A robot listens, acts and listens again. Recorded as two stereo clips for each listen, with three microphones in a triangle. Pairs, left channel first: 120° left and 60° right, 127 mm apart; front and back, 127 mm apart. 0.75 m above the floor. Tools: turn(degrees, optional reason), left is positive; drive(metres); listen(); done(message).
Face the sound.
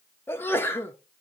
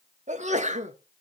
turn(degrees=-170, reason="The sneeze: 170° right.")
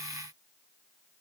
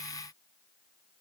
done("Facing where the sneeze came from. I can't hear it now.")